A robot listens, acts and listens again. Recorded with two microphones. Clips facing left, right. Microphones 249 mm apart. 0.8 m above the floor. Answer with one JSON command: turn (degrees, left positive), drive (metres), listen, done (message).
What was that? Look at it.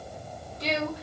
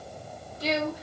{"turn": -30}
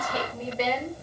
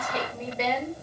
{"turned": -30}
{"turn": 30}
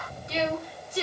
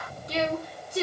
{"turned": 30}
{"turn": -50}
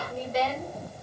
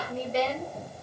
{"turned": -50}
{"turn": -30}
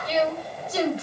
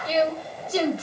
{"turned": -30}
{"turn": -35}
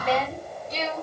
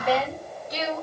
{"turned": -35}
{"turn": -15}
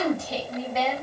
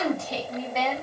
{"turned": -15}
{"done": "Found it: a woman speaking, straight ahead."}